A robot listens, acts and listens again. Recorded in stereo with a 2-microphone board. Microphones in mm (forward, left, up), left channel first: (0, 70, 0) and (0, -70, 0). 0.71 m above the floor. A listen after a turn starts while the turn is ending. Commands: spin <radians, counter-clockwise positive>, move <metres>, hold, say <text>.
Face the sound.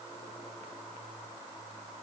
hold
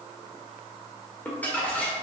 spin 0.52
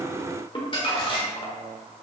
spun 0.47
spin 2.44
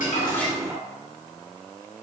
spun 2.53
hold
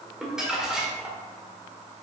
say Facing the crumpling, 1 to 2 m away.